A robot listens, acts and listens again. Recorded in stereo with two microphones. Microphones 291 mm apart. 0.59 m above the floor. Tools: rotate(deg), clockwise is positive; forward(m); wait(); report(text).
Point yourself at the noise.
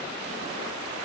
wait()
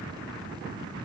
wait()
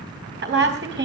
rotate(40)
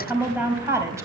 rotate(10)
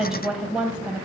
report("Facing the woman speaking, 2 to 4 m away.")